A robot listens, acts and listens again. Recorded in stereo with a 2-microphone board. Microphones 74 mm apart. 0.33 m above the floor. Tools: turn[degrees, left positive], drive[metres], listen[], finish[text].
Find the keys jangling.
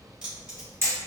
Action: turn[-30]
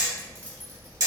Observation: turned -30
Thought: So it is at 25° left.
Action: turn[25]
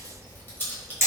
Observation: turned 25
Thought: The keys jangling is now 25° left.
Action: turn[25]
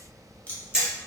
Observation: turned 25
Thought: The keys jangling is now 20° left.
Action: turn[20]
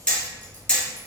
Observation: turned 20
Action: listen[]
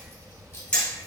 Thought: The keys jangling is now 40° left.
Action: turn[40]
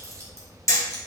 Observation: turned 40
Thought: The keys jangling is now 15° left.
Action: turn[15]
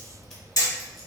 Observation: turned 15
Action: finish[Found it: keys jangling, straight ahead.]